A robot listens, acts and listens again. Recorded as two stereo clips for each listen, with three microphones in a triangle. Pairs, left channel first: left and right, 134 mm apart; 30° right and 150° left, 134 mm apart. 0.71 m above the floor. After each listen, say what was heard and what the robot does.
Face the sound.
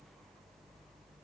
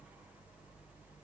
Keep listening.
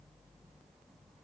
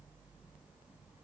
Keep listening.
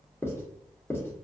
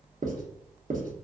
The writing: 160° left. Turn 160° left.
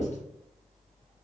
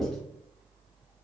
The writing is now 55° left. Turn 55° left.
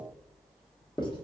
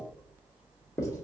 The writing is now 35° left. Turn 35° left.
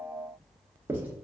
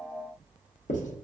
The writing is now 15° right. Turn 15° right.
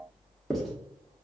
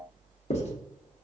Facing the writing.